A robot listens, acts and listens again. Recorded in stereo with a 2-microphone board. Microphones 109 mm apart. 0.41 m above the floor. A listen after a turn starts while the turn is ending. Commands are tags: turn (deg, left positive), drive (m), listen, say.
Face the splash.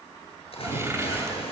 <turn deg="65"/>
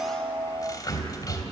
<listen/>
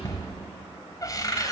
<say>I heard a splash, but can't make it out now. It was about straight ahead or 50° left.</say>